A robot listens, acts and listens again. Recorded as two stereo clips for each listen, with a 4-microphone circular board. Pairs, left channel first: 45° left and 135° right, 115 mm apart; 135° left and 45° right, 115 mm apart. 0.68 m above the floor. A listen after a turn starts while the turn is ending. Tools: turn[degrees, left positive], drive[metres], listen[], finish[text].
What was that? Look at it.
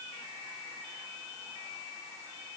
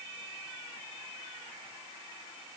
Action: listen[]
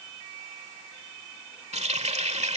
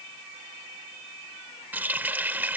Thought: The running tap: 120° right.
Action: turn[-120]
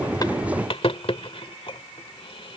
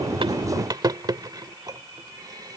Thought: The running tap is now 10° left.
Action: turn[10]
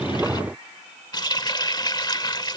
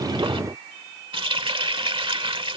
Action: finish[Found it: a running tap, straight ahead.]